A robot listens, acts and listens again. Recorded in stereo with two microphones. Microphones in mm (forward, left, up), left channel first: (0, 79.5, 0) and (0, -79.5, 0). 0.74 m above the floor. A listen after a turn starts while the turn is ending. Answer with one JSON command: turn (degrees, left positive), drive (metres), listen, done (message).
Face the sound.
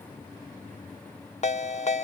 {"turn": 45}
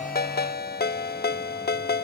{"turn": 90}
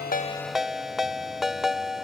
{"done": "Facing the ringtone."}